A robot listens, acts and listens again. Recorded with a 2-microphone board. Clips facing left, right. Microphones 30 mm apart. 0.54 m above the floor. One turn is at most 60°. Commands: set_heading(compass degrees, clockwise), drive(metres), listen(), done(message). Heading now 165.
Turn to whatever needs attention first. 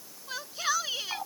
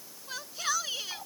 set_heading(135)
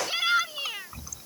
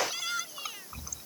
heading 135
set_heading(75)
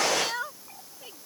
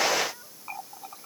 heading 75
set_heading(15)
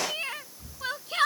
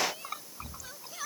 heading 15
set_heading(315)
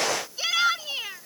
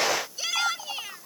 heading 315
set_heading(295)
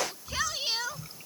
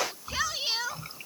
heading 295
done("Found it: a shout, straight ahead.")